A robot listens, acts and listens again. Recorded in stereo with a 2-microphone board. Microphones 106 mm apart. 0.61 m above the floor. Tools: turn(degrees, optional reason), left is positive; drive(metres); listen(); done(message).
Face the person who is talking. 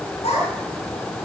turn(degrees=75, reason="The child speaking: about 75° left or 105° left.")
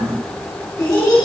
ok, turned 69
turn(degrees=35, reason="So it is at 35° left.")
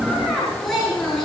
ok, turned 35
done("Found it: a child speaking, straight ahead.")